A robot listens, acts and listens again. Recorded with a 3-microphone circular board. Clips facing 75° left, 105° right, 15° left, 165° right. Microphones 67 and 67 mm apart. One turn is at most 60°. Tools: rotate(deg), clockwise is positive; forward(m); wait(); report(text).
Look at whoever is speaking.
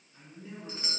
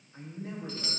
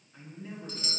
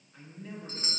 rotate(60)
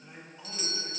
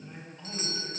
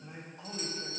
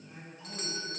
report("Facing the man speaking.")